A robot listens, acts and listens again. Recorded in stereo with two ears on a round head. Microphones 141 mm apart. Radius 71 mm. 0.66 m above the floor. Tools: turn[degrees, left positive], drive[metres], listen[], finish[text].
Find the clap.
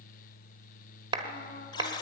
Thought: The clap: about 30° right or 150° right.
Action: turn[-30]
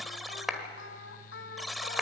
Action: finish[Facing the clap.]